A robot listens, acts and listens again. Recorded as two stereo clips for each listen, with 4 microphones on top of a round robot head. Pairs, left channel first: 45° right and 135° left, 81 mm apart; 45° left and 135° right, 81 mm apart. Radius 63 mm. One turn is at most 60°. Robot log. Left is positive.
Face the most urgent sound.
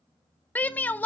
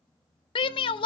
note: The shout: 25° left.
cmd yaw +25
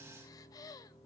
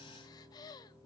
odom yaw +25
cmd idle
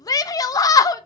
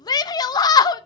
end: Found it: a shout, straight ahead, under 1 m away.